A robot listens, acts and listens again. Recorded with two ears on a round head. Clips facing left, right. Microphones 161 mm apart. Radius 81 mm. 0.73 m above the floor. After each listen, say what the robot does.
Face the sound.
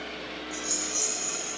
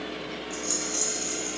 Turn 45° right.
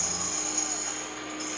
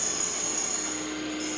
Found it: a rattle, straight ahead.